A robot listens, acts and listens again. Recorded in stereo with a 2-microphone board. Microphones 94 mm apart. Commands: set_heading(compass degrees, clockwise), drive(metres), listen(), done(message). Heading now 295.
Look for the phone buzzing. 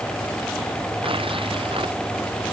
listen()
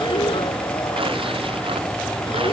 listen()
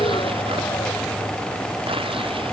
done("I can't make out a phone buzzing.")